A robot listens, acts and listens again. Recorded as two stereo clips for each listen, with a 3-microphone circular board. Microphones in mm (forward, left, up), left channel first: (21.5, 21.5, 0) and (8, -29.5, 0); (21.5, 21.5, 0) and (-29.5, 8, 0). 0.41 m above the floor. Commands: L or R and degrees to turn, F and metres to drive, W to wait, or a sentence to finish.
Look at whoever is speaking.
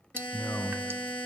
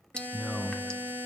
L100
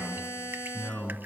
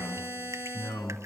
Facing the man speaking, over 4 m away.